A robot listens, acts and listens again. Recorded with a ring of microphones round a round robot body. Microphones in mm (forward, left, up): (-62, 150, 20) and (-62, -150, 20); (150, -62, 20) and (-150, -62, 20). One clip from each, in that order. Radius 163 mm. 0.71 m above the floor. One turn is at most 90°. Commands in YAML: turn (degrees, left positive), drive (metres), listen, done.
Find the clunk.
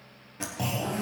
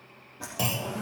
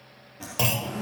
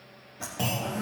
turn: -30
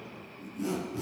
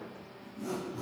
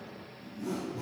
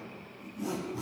done: "I heard a clunk from this way, but can't make it out now."